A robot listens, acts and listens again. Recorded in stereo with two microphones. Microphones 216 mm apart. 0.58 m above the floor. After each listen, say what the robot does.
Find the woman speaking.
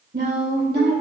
Turn 50° right.
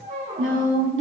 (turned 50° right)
Turn 65° right.
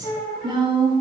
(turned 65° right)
Turn 25° right.
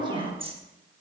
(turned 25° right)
Turn 25° right.
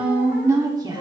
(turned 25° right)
Turn 20° right.
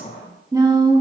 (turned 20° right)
Turn 20° right.
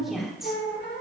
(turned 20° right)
Found it: a woman speaking, straight ahead.